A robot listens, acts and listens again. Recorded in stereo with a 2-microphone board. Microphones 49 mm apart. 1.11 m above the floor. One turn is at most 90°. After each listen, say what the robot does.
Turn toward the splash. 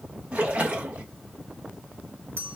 Turn 25° right.
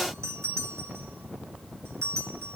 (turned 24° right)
Keep listening.
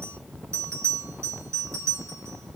I heard a splash, but can't make it out now. It was about 5° right or 130° right.